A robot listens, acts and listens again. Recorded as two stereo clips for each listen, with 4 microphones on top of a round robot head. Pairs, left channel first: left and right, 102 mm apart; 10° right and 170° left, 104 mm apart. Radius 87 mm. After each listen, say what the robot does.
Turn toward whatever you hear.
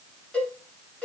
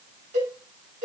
Turn 170° left.
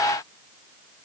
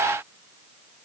Keep listening.
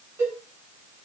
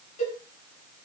Turn 20° right.
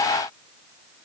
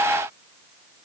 Keep listening.
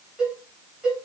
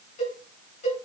Facing the cowbell, over 4 m away.